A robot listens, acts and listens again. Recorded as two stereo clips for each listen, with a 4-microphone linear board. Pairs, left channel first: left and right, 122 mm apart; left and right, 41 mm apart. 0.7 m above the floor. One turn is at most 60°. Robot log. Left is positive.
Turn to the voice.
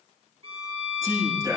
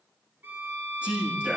note: The man speaking: about 25° right or 155° right.
cmd yaw -25
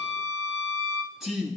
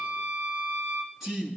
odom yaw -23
end: Facing the man speaking, over 4 m away.